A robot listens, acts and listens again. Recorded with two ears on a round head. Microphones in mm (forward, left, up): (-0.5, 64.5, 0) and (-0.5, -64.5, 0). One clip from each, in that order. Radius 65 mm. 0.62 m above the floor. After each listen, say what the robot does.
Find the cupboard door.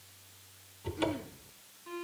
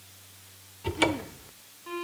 Turn 50° right.
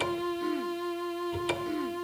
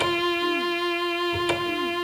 Facing the cupboard door, 1 to 2 m away.